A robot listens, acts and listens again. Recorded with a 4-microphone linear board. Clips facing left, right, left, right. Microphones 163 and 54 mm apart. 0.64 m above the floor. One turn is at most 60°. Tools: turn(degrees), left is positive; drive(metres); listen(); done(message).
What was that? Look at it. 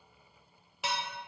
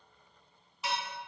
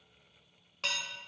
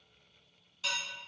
turn(degrees=60)
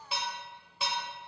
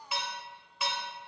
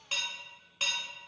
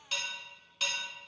turn(degrees=30)
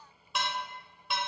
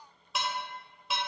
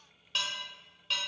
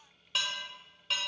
done("Facing the dishes clattering.")